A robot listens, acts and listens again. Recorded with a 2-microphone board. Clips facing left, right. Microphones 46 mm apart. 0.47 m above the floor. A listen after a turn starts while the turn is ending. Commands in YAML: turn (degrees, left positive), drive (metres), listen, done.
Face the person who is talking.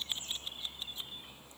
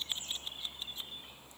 listen: true
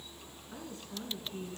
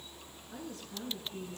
turn: 30
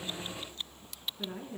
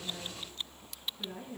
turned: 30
turn: 115
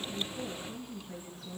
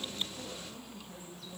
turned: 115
turn: 20
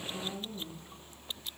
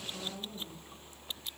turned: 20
done: "Found it: a woman speaking, straight ahead."